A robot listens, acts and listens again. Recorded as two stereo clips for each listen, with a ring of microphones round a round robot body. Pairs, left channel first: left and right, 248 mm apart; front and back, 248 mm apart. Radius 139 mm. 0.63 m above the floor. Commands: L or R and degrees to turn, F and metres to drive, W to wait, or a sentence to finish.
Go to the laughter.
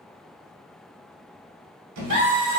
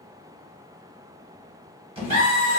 R150
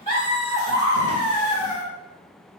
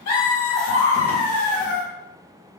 L25
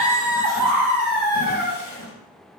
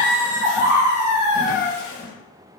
R10
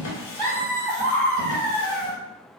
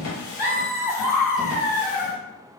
F1.0
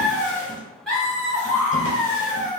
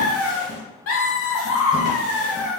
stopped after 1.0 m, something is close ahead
I am next to the laughter.